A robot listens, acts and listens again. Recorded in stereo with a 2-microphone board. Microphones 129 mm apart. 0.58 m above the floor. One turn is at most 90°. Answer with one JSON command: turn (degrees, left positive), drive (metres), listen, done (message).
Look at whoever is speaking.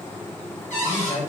{"turn": 40}
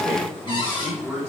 {"done": "Found it: a man speaking, straight ahead."}